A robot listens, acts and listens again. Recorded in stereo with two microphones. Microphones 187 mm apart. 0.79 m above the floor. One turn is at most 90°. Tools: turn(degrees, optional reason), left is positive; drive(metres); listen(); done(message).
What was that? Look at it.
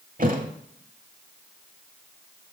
turn(degrees=-45, reason="The thud: about 45° right or 135° right.")
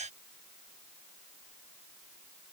listen()
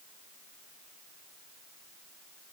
done("I heard a thud, but can't make it out now. It was about straight ahead or 90° right.")